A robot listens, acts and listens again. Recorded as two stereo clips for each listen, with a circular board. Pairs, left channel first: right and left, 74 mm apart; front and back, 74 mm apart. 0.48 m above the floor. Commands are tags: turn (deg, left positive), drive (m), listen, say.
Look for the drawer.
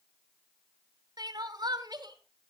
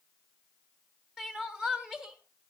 <listen/>
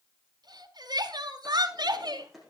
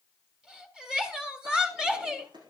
<turn deg="180"/>
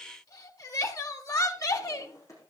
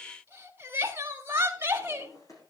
<turn deg="-40"/>
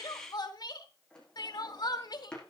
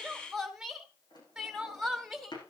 <turn deg="-10"/>
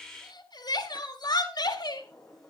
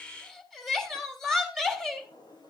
<say>Found it: a drawer, straight ahead, over 4 m away.</say>